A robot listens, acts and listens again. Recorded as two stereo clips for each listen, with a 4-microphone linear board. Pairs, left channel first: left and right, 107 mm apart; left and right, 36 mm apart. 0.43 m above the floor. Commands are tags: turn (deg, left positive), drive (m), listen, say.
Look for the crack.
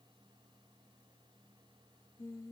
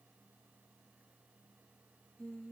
<listen/>
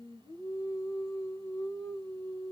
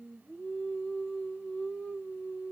<listen/>
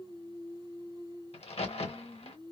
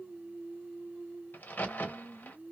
<turn deg="65"/>
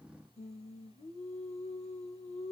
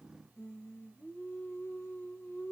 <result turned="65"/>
<listen/>
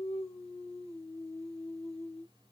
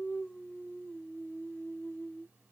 <say>I heard a crack, but can't make it out now. It was about straight ahead or 50° left.</say>